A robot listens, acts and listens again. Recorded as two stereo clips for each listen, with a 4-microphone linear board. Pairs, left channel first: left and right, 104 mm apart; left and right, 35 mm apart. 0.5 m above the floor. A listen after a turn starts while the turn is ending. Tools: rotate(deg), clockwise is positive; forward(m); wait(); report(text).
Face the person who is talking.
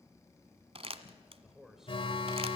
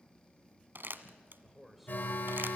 rotate(30)
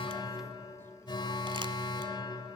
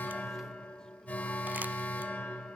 wait()
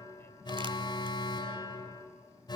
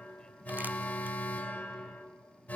wait()
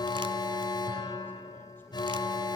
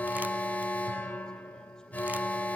report("I heard a man speaking, but can't make it out now. It was about 25° left or 145° right.")